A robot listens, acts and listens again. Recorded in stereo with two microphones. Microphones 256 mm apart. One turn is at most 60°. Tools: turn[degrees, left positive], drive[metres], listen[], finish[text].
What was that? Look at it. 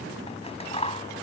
Thought: The scissors: about 25° left or 155° left.
Action: turn[25]
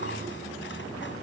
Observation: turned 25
Action: listen[]
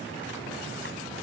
Action: listen[]
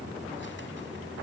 Action: finish[I heard scissors, but can't make it out now. It was about straight ahead or 130° left.]